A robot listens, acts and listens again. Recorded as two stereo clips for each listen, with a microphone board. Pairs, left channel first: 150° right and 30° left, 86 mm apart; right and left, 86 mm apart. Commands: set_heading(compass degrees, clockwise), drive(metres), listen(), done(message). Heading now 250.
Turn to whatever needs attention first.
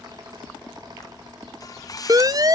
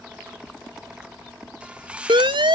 set_heading(180)
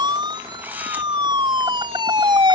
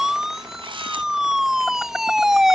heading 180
done("Found it: a siren, straight ahead.")